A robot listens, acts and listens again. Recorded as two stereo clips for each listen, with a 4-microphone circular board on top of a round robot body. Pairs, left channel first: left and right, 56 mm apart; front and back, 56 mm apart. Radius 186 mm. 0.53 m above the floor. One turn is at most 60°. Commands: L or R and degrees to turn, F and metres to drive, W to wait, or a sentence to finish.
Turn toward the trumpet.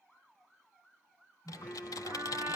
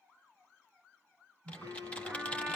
R60
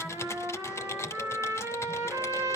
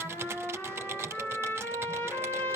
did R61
R50
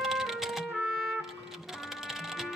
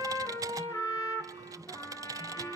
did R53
Found it: a trumpet, straight ahead, 2 to 4 m away.